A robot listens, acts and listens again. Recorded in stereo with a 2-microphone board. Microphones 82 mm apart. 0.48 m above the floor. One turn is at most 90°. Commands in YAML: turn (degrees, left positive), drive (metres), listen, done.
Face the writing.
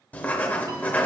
turn: 20
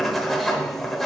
done: "Found it: writing, straight ahead, under 1 m away."